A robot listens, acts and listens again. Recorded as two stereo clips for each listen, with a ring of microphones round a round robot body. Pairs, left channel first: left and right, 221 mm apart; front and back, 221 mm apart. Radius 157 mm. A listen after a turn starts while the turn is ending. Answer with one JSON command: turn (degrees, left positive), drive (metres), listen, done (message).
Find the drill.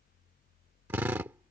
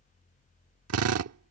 {"turn": -175}
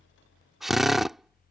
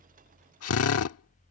{"done": "Found it: a drill, straight ahead."}